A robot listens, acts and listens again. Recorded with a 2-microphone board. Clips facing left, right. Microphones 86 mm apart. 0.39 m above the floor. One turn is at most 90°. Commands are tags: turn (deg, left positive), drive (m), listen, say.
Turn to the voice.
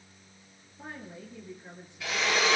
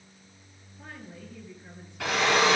<turn deg="20"/>
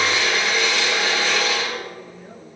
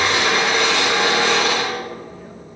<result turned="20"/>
<listen/>
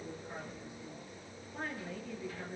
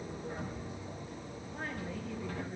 <say>Facing the woman speaking, over 4 m away.</say>